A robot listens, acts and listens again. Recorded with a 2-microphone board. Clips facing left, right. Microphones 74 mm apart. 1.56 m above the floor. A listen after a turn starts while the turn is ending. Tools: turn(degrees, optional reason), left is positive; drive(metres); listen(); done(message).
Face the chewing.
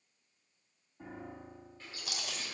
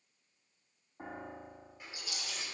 turn(degrees=70, reason="The chewing: about 70° left or 110° left.")
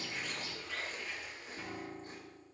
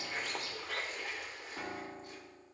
listen()
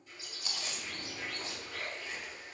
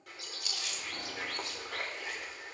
turn(degrees=35, reason="So it is at 35° left.")
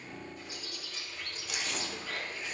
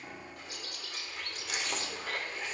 listen()
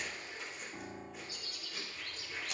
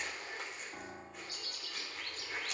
done("Found it: chewing, straight ahead.")